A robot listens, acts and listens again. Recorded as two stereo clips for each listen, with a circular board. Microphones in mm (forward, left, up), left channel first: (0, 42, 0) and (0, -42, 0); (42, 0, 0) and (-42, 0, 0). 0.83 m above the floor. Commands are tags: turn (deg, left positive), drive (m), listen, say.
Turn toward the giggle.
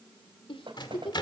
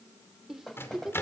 <turn deg="95"/>
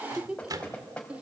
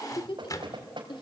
<turn deg="-15"/>
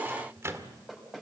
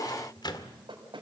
<listen/>
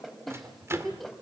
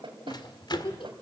<say>Found it: a giggle, straight ahead.</say>